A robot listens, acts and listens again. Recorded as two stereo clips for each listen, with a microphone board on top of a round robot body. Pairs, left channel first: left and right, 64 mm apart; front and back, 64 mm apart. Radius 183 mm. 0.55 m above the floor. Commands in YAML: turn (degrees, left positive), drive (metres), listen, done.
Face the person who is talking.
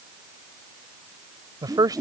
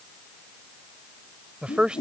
turn: -105
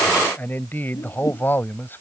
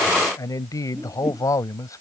turn: 35
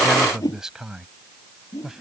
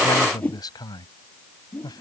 done: "Facing the man speaking."